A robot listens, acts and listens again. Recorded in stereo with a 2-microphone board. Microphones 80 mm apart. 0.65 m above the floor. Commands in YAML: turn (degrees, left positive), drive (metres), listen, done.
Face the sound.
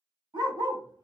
turn: -70
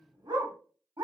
turn: -65
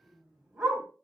turn: -10
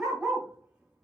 turn: -10
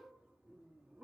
turn: -10
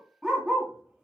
done: "Facing the dog barking."